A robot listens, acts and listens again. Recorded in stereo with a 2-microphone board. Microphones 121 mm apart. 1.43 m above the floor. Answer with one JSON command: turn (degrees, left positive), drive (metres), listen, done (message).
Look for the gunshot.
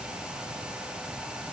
{"listen": true}
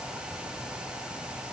{"listen": true}
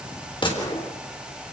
{"turn": 45}
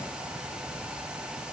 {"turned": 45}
{"listen": true}
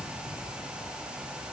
{"done": "I heard a gunshot, but can't make it out now. It was about straight ahead or 90° left."}